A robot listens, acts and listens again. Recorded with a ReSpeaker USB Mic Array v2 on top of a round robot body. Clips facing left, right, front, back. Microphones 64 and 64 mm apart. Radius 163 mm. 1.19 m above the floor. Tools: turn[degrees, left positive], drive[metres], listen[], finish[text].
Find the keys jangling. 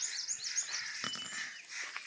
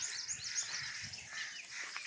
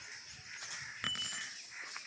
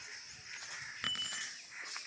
Thought: The keys jangling: 85° left.
Action: turn[85]
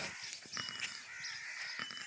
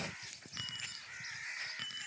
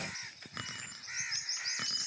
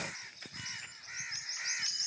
Action: listen[]
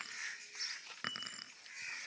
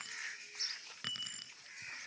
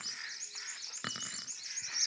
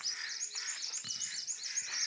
Thought: The keys jangling is now 30° left.
Action: turn[30]
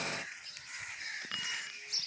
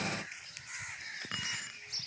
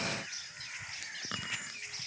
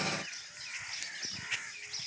Action: listen[]
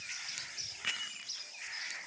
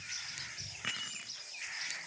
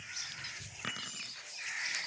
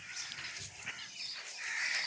Action: listen[]
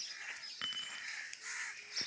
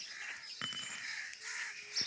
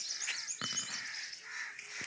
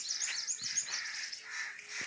Action: finish[Facing where the keys jangling came from. I can't hear it now.]